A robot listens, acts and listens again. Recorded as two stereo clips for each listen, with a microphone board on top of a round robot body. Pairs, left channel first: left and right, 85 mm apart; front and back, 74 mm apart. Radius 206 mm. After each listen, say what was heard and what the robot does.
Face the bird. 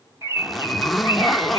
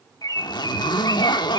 The bird: 30° right. Turn 30° right.
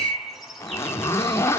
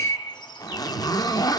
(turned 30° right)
Found it: a bird, straight ahead, over 4 m away.